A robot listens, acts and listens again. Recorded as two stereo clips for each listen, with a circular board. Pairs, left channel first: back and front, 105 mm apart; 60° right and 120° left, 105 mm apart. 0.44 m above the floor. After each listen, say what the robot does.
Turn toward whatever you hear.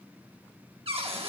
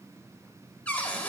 Turn 15° left.
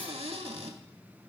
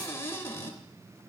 Found it: a cupboard door, straight ahead.